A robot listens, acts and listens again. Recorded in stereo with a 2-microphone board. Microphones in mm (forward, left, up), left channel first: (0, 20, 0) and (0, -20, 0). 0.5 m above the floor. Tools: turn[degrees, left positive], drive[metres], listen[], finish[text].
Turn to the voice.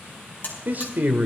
Thought: The man speaking: about 45° right or 135° right.
Action: turn[-45]
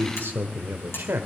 Thought: So it is at 85° right.
Action: turn[-85]
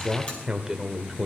Thought: The man speaking is now 15° right.
Action: turn[-15]
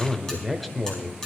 Action: finish[Found it: a man speaking, straight ahead, 1 to 2 m away.]